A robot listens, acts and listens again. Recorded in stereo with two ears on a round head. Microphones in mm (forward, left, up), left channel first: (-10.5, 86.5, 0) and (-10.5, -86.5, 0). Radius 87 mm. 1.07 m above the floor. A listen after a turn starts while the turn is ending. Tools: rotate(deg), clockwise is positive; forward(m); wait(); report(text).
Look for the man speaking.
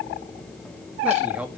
rotate(30)
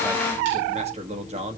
rotate(145)
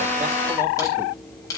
wait()
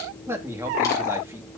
rotate(15)
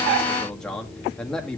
report("Found it: a man speaking, straight ahead.")